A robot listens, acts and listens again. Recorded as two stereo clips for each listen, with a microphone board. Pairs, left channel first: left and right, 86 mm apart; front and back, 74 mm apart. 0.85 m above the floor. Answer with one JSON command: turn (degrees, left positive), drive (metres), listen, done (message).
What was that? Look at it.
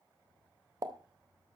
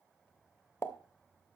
{"turn": -50}
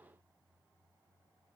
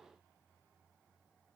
{"done": "I heard a pop from this way, but can't make it out now."}